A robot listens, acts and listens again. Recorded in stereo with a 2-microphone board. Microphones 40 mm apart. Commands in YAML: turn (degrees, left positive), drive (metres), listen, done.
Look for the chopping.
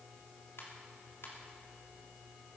listen: true
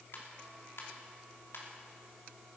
listen: true
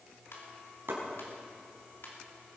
turn: -70
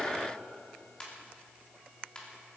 listen: true
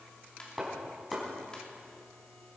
done: "Facing the chopping, over 4 m away."